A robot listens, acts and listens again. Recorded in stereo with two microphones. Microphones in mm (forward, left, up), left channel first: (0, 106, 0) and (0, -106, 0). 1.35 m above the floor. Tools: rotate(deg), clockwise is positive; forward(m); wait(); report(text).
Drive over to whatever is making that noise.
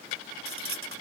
rotate(90)
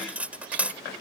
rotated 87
forward(1.0)
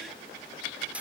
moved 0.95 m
forward(1.0)
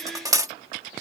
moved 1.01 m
rotate(15)
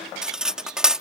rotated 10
forward(1.0)
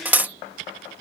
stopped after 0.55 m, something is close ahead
rotate(10)
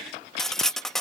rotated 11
report("Arrived at the cutlery clinking, straight ahead.")